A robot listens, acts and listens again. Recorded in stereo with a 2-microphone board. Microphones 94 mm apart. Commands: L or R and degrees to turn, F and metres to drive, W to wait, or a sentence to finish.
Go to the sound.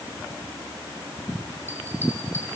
W
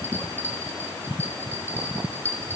R25
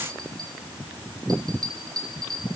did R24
R130
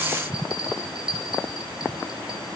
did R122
R10
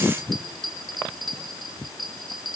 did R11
F1.0
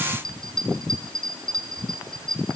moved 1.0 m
F1.0
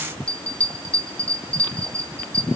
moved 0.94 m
L15
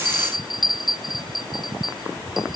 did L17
F1.0
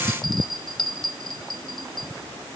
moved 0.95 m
F1.0
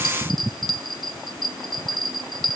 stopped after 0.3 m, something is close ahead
I am next to the bell.